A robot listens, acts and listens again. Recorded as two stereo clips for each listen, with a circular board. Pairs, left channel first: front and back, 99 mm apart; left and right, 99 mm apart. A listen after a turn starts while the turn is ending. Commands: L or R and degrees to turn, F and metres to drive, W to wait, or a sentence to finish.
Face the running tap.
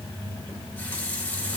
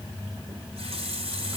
R70
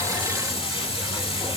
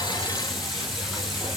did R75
W
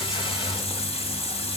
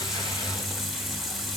Facing the running tap.